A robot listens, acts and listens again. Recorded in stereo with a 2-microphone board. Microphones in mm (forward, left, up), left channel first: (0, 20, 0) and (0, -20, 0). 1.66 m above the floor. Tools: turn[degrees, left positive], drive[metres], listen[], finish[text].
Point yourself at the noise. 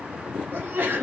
Thought: The sneeze: about 50° right or 130° right.
Action: turn[-50]
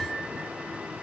Action: listen[]
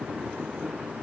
Action: finish[I heard a sneeze, but can't make it out now. It was about straight ahead or 80° right.]